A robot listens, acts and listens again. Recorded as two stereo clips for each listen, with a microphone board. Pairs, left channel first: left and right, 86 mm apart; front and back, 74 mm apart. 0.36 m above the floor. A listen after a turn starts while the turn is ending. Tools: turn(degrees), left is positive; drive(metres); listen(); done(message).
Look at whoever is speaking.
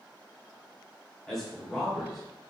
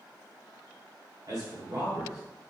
turn(degrees=175)
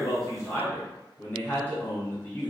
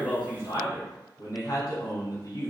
turn(degrees=25)
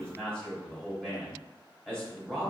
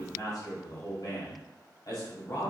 turn(degrees=10)
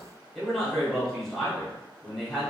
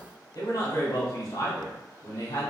done("Found it: a man speaking, straight ahead.")